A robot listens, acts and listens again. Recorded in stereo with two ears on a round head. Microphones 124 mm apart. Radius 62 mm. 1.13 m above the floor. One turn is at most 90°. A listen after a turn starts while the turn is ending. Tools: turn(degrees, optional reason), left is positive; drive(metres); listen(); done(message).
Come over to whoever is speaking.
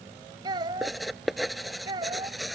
turn(degrees=-35, reason="The child speaking: about 35° right or 145° right.")
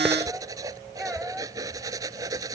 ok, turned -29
listen()
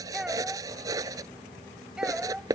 drive(metres=1.0)
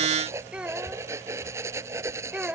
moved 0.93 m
turn(degrees=-10, reason="The child speaking is now 10° right.")
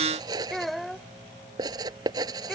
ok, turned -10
drive(metres=1.0)
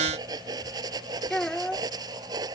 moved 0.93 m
drive(metres=1.0)
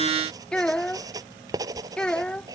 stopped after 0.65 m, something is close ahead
done("I am next to the child speaking.")